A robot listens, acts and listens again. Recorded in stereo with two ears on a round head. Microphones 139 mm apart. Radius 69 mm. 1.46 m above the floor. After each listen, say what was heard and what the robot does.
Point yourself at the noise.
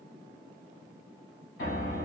Turn 90° left.
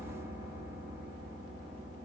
Facing the piano, 2 to 4 m away.